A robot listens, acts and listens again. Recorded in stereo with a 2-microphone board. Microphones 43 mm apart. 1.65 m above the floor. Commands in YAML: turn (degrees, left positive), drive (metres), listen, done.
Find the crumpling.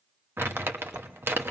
turn: -65
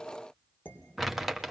done: "Facing the crumpling, 1 to 2 m away."